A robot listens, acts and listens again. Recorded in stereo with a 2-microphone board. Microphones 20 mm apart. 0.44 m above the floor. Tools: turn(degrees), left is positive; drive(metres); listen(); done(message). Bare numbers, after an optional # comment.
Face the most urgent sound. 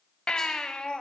# The baby crying: about 60° left or 120° left.
turn(60)
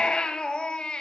# So it is at 55° left.
turn(55)
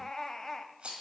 # The baby crying is now 20° left.
turn(20)
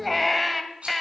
done("Facing the baby crying, 1 to 2 m away.")